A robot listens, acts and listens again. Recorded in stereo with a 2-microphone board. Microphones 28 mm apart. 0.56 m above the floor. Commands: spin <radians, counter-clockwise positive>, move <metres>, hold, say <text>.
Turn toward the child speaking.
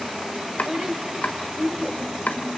spin -0.70
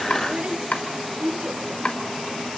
spin -1.75
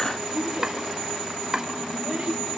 spin -0.44
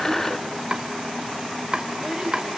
hold
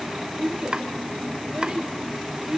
spin -0.17
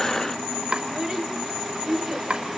say Facing the child speaking.